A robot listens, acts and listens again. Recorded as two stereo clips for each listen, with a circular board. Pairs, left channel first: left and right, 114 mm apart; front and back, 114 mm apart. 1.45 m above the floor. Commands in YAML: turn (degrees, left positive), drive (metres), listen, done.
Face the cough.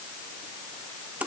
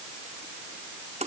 listen: true
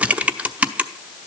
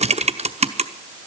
listen: true
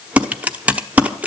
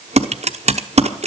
done: "I can't make out a cough, only typing on a keyboard."